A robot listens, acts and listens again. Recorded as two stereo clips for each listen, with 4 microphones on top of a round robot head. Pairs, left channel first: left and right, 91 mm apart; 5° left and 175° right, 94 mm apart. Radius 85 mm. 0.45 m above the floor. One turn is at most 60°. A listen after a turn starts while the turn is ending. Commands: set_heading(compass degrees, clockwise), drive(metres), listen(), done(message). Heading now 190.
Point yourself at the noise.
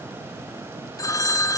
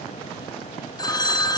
set_heading(145)
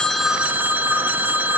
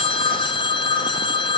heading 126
set_heading(146)
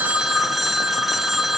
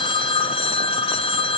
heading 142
done("Facing the phone ringing.")